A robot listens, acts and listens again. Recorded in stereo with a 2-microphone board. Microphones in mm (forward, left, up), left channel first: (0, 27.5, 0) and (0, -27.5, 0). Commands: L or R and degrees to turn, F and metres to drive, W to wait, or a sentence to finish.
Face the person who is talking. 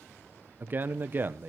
R40
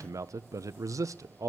R100
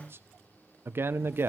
R40
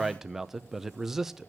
Facing the man speaking, under 1 m away.